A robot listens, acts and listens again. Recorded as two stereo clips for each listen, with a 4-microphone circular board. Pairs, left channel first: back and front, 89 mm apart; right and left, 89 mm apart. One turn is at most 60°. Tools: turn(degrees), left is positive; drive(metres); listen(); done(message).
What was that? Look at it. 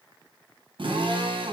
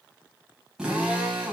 turn(degrees=10)
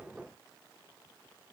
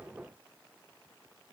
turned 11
listen()
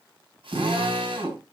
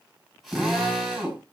done("Facing the drill, over 4 m away.")